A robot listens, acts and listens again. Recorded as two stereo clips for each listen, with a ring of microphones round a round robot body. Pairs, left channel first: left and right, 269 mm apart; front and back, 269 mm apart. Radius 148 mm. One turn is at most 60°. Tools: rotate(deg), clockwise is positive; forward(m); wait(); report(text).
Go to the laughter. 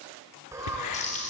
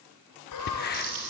rotate(10)
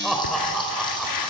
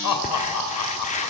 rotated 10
forward(1.0)
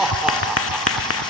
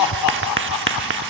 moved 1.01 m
forward(1.0)
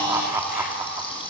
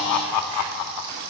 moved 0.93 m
rotate(10)
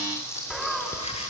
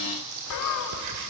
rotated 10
forward(1.0)
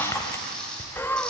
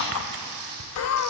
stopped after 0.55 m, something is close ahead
report("Arrived at the laughter, straight ahead.")